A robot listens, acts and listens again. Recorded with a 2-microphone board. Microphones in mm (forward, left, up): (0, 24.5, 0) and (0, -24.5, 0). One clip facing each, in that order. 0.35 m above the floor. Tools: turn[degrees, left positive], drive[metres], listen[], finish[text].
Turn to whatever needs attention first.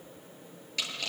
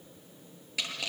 Action: listen[]
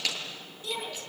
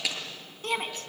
Thought: The shout: about 50° right or 130° right.
Action: turn[-50]
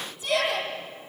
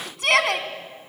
Thought: So it is at 75° right.
Action: turn[-75]
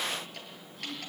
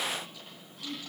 Action: listen[]
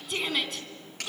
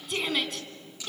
Action: finish[Found it: a shout, straight ahead, 2 to 4 m away.]